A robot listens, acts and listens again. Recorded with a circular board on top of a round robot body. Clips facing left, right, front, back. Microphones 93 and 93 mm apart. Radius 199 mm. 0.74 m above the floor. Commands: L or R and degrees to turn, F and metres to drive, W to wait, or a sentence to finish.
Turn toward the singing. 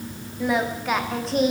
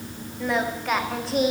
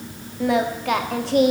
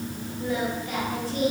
Found it: singing, straight ahead, 1 to 2 m away.